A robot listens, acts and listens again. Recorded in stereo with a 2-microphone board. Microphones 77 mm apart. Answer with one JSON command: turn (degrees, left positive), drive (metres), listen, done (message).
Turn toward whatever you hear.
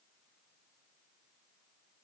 {"listen": true}
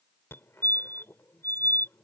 {"turn": 30}
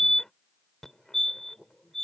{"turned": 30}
{"done": "Facing the fire alarm."}